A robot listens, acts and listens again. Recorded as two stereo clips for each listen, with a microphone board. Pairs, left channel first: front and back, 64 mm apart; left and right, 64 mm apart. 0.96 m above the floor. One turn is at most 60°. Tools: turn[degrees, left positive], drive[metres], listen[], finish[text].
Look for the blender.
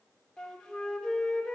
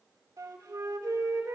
Action: listen[]
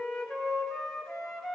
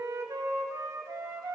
Action: listen[]
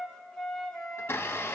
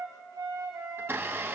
Thought: The blender: 45° right.
Action: turn[-45]
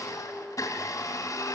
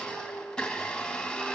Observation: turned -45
Thought: The blender is now 15° left.
Action: turn[15]
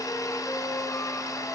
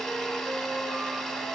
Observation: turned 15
Action: finish[Found it: a blender, straight ahead, 2 to 4 m away.]